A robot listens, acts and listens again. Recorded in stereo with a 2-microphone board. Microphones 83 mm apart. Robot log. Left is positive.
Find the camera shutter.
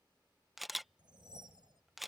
cmd yaw +30
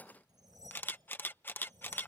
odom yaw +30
note: So it is at 150° left.
cmd yaw +150
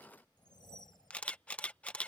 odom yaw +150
note: The camera shutter is now 15° left.
cmd yaw +15
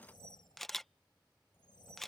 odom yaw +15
end: Facing the camera shutter.